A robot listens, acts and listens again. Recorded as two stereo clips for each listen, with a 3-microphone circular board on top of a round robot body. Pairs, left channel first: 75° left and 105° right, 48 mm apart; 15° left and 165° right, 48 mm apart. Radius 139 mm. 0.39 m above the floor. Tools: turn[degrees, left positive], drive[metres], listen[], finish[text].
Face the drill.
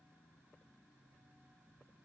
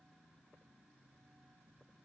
Action: listen[]
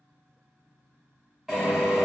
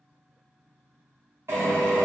Thought: The drill: 170° left.
Action: turn[170]
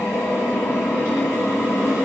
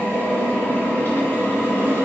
Thought: The drill is now 55° left.
Action: turn[55]
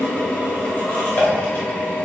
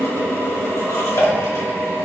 Thought: The drill is now 25° left.
Action: turn[25]
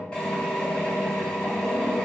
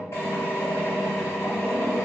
Action: finish[Facing the drill, 2 to 4 m away.]